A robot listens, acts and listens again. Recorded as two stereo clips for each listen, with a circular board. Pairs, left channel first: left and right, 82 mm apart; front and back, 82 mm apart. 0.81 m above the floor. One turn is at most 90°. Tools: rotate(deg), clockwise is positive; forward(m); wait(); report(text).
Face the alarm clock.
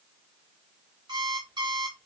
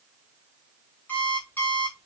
rotate(65)
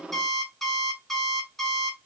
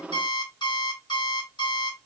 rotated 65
report("Found it: an alarm clock, straight ahead, 2 to 4 m away.")